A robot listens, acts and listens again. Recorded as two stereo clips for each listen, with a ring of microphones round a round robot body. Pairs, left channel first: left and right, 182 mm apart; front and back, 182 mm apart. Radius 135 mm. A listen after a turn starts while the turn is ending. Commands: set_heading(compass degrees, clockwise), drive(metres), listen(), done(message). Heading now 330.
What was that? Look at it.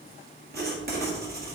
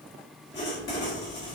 set_heading(40)
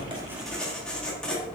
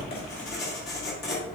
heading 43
done("Found it: writing, straight ahead, 1 to 2 m away.")